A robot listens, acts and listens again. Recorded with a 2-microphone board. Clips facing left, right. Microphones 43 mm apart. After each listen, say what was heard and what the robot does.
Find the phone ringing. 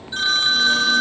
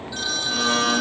The phone ringing: about 45° left or 135° left. Turn 45° left.
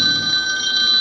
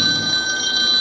Facing the phone ringing.